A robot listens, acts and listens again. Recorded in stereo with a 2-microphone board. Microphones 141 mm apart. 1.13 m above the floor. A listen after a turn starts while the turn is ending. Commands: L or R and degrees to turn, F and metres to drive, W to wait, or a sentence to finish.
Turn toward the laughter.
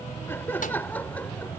L30
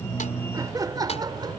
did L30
R30
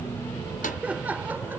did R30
R15
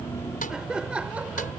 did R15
R10
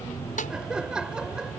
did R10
Found it: laughter, straight ahead.